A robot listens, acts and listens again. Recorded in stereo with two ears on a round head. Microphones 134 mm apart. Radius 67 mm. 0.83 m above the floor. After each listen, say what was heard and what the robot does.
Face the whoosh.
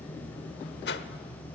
The whoosh: about 75° left or 105° left. Turn 75° left.
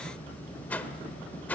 So it is at 10° left. Turn 10° left.
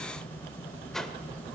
Found it: a whoosh, straight ahead.